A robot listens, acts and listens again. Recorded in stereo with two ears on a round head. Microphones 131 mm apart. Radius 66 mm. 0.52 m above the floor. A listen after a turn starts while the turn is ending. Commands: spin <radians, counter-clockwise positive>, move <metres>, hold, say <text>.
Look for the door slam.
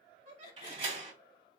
spin -0.61
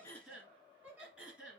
hold
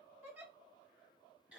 say I heard a door slam, but can't make it out now. It was about straight ahead or 110° right.